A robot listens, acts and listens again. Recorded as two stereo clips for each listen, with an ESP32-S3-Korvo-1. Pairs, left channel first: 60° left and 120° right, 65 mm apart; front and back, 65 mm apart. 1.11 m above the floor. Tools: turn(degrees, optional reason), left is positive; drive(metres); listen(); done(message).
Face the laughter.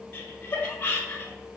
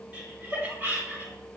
turn(degrees=125, reason="The laughter: 125° left.")
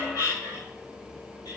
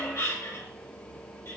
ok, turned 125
turn(degrees=35, reason="The laughter is now 35° left.")
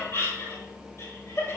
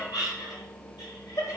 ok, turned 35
turn(degrees=15, reason="The laughter is now 15° left.")
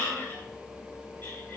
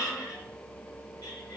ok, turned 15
done("Facing the laughter.")